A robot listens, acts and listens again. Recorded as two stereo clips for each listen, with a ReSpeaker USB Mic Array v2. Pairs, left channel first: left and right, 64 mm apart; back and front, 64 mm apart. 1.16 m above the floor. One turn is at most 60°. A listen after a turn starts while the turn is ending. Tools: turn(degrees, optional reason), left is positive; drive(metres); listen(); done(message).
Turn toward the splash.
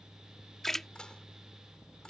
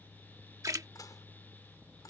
done("Facing the splash.")